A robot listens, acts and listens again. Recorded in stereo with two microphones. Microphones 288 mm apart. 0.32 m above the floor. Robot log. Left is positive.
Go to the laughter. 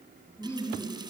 cmd yaw +30
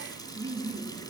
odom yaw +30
note: So it is at 20° right.
cmd yaw -20
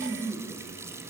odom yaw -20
cmd fwd 1.0
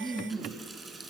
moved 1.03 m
cmd fwd 1.0
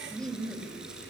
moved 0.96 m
cmd fwd 1.0
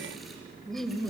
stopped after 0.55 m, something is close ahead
end: Arrived at the laughter, straight ahead.